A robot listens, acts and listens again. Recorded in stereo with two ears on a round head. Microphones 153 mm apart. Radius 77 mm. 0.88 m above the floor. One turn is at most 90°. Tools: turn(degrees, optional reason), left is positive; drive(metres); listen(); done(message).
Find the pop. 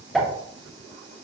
turn(degrees=30)
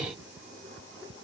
listen()
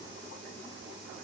done("I heard a pop, but can't make it out now. It was about 30° right or 150° left.")